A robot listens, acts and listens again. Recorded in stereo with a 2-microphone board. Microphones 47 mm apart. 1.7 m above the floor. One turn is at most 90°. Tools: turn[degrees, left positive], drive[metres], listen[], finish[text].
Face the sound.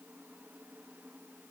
Action: listen[]
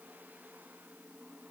Action: listen[]
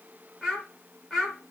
Action: turn[30]
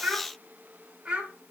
Thought: So it is at 20° right.
Action: turn[-20]
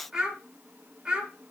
Thought: The child speaking is now 10° right.
Action: turn[-10]
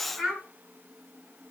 Action: finish[Facing the child speaking.]